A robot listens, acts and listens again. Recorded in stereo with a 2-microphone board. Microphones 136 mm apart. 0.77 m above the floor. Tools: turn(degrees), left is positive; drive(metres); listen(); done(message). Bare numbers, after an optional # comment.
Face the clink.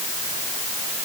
listen()
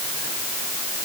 listen()
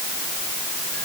done("I can't make out a clink to turn to.")